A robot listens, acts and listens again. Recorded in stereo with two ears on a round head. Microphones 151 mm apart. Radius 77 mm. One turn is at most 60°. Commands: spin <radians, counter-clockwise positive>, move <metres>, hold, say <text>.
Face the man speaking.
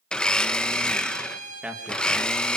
spin -0.52
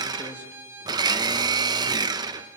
hold
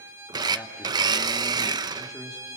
spin 0.52
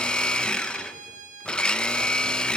hold
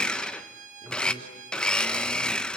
spin -0.44
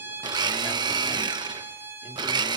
hold
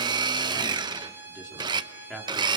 say Found it: a man speaking, straight ahead, 2 to 4 m away.